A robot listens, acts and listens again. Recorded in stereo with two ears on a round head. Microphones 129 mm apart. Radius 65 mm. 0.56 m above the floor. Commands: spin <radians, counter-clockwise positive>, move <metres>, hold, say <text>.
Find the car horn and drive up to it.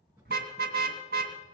spin -1.22
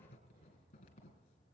hold
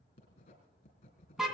move 1.0
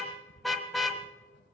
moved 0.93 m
move 1.0
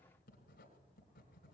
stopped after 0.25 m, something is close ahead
hold
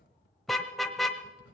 say Arrived at the car horn, straight ahead.